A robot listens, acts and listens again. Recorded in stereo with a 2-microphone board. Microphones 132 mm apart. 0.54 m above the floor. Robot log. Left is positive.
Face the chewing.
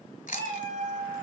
cmd yaw +90
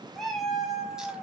cmd idle
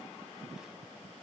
cmd idle
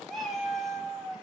end: I heard chewing from this way, but can't make it out now.